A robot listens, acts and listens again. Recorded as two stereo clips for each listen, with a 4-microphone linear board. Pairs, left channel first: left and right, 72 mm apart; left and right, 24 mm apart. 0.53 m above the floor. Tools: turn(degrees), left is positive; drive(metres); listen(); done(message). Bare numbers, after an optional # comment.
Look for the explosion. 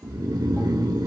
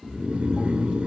listen()
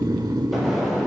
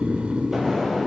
turn(-30)
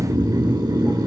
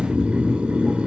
listen()
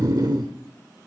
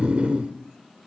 done("I heard an explosion, but can't make it out now. It was about 25° left or 145° right.")